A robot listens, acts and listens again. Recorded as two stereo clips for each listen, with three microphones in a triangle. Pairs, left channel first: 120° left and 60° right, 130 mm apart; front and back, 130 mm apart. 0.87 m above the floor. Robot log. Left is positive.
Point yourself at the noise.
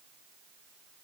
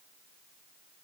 cmd idle
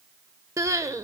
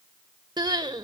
note: The crying: 125° right.
cmd yaw -125
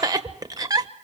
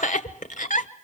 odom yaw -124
end: Found it: crying, straight ahead, 1 to 2 m away.